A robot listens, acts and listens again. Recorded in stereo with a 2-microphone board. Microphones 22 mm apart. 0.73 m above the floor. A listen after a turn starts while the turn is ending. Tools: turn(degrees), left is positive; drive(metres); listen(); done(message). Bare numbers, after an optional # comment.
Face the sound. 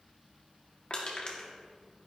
# The crushing: about 45° left or 135° left.
turn(45)
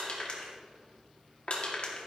# So it is at 80° left.
turn(80)
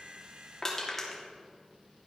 # The crushing is now 20° left.
turn(20)
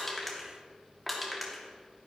done("Found it: crushing, straight ahead, 1 to 2 m away.")